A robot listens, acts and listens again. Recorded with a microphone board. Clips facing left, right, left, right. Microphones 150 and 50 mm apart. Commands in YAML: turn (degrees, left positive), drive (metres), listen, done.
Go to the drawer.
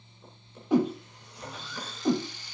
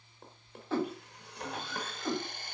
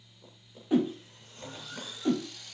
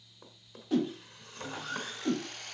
turn: -70
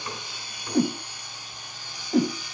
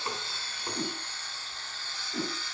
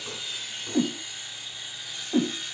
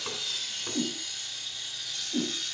turn: -40
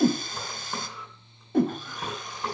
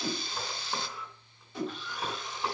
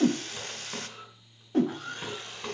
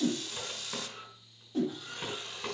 drive: 1.0
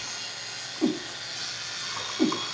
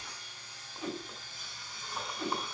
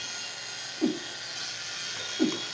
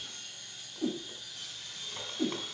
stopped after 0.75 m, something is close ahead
listen: true
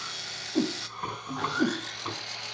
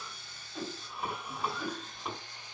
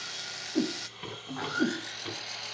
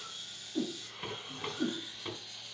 done: "Something is in my way. I am facing the drawer but have not reached it."